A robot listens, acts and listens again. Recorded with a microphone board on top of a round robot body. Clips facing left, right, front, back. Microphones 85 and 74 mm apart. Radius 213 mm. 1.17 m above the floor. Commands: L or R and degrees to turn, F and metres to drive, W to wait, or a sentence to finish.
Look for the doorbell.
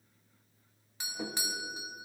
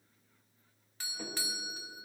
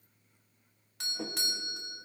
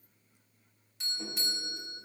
L20
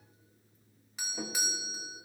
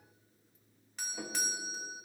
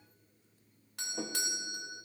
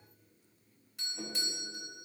Facing the doorbell.